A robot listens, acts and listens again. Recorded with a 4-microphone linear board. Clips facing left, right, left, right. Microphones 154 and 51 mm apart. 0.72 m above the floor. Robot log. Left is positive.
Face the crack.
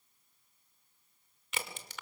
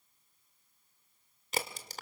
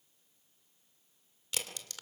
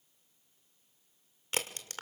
note: The crack: about 35° right or 145° right.
cmd yaw -35
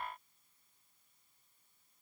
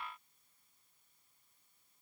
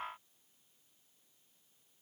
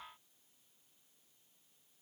cmd idle
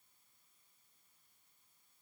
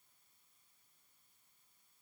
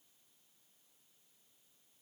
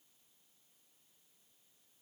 end: I heard a crack, but can't make it out now. It was about straight ahead or 110° right.